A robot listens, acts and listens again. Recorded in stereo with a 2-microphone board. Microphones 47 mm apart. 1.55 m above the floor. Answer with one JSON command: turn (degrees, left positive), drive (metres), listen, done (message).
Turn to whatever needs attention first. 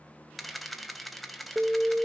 {"turn": -15}
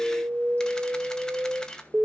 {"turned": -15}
{"turn": -150}
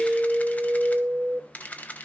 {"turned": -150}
{"turn": -15}
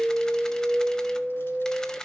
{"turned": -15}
{"done": "Found it: an alarm, straight ahead."}